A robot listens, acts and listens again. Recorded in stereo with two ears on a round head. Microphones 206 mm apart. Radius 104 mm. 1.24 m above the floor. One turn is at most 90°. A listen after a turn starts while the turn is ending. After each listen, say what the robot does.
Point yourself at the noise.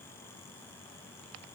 Keep listening.
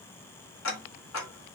Turn 60° left.
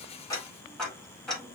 Facing the ticking, 1 to 2 m away.